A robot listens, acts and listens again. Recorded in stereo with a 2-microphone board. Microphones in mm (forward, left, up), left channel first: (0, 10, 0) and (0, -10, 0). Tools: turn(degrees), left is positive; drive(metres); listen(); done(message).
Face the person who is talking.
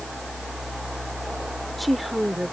turn(degrees=30)
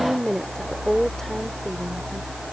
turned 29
turn(degrees=160)
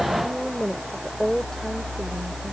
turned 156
turn(degrees=25)
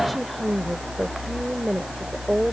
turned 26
done("Facing the woman speaking.")